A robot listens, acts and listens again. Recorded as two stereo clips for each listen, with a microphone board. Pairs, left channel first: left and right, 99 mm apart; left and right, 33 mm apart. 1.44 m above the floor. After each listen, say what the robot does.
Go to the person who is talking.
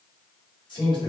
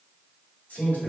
Turn 60° left.
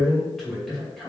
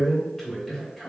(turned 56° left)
Drive 1.0 m forward.
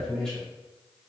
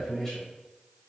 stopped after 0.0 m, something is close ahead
Blocked. The man speaking is further on, straight ahead.